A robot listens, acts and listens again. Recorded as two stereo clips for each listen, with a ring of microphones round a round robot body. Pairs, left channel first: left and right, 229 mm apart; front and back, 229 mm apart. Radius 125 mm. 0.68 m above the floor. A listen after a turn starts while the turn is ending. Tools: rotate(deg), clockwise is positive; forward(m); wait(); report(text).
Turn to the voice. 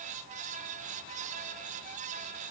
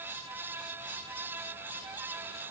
wait()
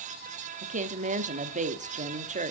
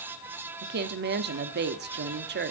rotate(145)
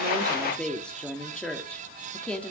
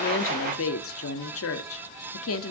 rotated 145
report("Found it: a woman speaking, straight ahead.")